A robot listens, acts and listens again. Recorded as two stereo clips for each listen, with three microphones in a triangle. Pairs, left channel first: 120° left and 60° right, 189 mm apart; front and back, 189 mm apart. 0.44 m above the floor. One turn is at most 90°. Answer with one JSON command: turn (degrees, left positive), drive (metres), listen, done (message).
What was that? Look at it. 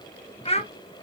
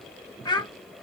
{"turn": 65}
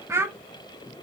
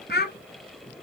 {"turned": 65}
{"turn": 15}
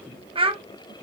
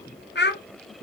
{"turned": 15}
{"done": "Found it: a child speaking, straight ahead, under 1 m away."}